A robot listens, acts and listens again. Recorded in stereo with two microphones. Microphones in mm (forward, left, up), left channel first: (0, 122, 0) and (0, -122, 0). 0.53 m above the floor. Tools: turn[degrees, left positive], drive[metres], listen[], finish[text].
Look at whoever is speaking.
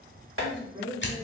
Thought: The woman speaking: about 20° right or 160° right.
Action: turn[-20]
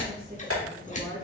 Thought: So it is at 135° right.
Action: turn[-135]
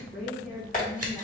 Action: finish[Found it: a woman speaking, straight ahead, 1 to 2 m away.]